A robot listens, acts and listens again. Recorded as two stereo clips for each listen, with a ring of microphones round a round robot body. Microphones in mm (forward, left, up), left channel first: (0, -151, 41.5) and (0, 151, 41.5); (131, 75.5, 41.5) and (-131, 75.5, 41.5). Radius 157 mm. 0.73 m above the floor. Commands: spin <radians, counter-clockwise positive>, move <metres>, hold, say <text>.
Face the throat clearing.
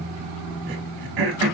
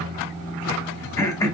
spin 1.31
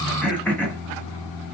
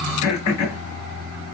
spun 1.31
say Facing the throat clearing.